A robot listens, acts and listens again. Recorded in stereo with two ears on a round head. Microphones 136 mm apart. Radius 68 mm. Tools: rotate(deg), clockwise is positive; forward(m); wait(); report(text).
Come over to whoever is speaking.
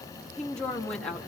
rotate(-30)
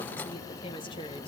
rotate(-145)
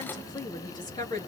rotate(-25)
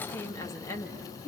rotate(-15)
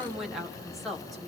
forward(1.0)
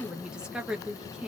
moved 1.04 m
forward(1.0)
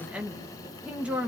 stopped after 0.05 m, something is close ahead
rotate(10)
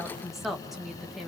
report("Blocked. The woman speaking is further on, straight ahead.")